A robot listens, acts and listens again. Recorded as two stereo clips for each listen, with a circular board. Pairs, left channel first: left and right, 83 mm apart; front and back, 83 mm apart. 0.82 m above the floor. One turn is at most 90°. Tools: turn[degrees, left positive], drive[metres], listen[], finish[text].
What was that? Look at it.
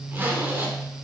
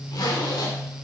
Thought: The zipper: 30° right.
Action: turn[-30]
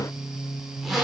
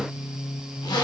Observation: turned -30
Action: finish[Found it: a zipper, straight ahead.]